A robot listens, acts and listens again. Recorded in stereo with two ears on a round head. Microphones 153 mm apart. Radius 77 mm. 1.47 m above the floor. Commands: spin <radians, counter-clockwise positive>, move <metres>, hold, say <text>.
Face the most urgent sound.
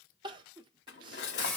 spin -0.52
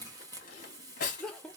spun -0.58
say Found it: crying, straight ahead, under 1 m away.